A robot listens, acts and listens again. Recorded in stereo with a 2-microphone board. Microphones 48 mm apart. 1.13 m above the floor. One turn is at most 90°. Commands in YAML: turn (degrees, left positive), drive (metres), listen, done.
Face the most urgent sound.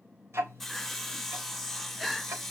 turn: 30
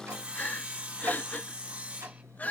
turn: 90
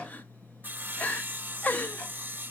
turn: 35
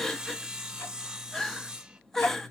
turn: 10
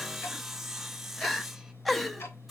done: "Facing the crying, 1 to 2 m away."